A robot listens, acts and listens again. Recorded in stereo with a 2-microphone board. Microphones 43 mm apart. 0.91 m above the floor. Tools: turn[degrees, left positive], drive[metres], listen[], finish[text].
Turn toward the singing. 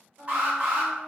Action: turn[-90]
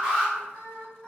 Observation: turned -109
Thought: So it is at 20° left.
Action: turn[20]
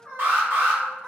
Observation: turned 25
Action: finish[Found it: singing, straight ahead, 1 to 2 m away.]